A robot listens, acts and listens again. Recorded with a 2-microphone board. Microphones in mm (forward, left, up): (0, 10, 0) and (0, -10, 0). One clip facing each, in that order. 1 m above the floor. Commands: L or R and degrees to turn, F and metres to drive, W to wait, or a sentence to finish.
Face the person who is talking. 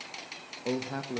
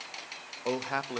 R55
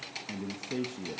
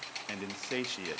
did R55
R70
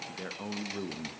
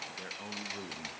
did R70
L10
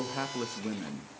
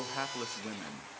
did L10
Found it: a man speaking, straight ahead.